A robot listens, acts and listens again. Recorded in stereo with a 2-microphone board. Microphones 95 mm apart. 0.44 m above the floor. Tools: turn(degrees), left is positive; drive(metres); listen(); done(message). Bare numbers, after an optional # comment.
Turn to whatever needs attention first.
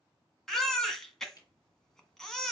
turn(30)
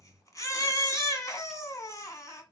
# So it is at 145° left.
turn(145)
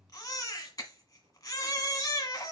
# The baby crying is now 35° left.
turn(35)
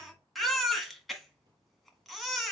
done("Found it: a baby crying, straight ahead, 1 to 2 m away.")